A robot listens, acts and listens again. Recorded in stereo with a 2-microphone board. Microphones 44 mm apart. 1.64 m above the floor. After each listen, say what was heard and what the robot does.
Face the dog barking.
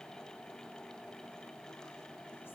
Keep listening.
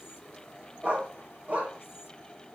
The dog barking: about 35° right or 145° right. Turn 35° right.
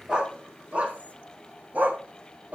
The dog barking: about 40° right or 140° right. Turn 40° right.
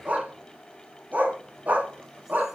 The dog barking: about 40° right or 140° right. Turn 40° right.
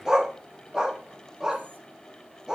So it is at 15° right. Turn 15° right.
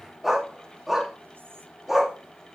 Found it: a dog barking, straight ahead.